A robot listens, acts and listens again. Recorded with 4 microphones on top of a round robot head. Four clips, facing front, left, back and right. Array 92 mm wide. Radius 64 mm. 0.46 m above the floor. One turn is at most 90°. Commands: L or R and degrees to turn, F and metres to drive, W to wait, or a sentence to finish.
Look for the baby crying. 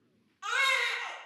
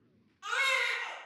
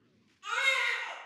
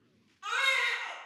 L10
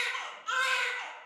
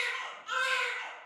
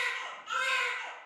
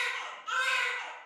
Facing the baby crying, under 1 m away.